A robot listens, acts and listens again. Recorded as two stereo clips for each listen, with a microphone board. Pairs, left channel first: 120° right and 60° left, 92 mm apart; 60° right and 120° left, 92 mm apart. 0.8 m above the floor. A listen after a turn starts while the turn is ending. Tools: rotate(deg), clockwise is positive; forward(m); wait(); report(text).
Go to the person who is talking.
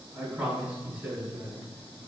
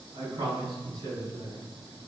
rotate(-135)
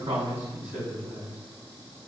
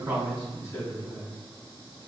forward(1.0)
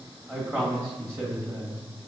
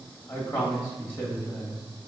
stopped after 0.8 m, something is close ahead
report("I am next to the man speaking.")